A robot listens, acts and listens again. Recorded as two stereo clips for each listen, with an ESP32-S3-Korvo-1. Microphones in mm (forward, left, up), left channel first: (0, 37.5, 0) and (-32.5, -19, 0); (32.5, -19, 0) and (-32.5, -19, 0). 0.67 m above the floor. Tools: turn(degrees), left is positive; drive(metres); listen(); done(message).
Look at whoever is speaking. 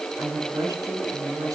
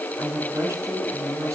turn(degrees=-135)
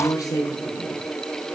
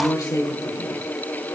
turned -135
turn(degrees=25)
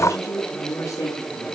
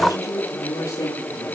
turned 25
turn(degrees=20)
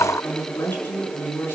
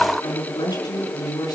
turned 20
done("Facing the woman speaking, over 4 m away.")